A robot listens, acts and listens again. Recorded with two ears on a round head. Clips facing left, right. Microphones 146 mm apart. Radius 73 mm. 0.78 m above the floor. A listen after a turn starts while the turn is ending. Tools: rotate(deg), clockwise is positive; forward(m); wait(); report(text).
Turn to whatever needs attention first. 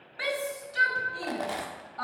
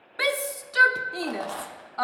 rotate(65)
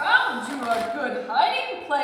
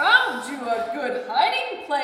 rotate(15)
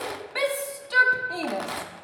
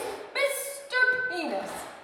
report("Found it: a shout, straight ahead.")